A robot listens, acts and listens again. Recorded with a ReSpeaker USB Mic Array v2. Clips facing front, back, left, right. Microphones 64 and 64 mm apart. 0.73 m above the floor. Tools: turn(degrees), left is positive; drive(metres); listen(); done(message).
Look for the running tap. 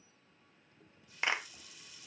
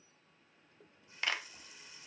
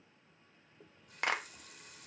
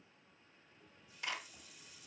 turn(degrees=120)
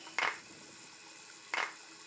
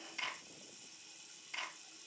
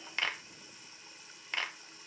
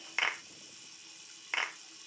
turn(degrees=35)
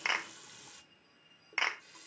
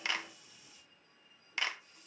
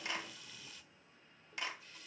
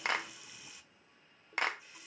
turn(degrees=-15)
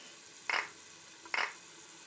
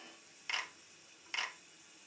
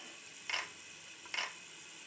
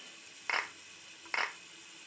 done("Facing the running tap, 1 to 2 m away.")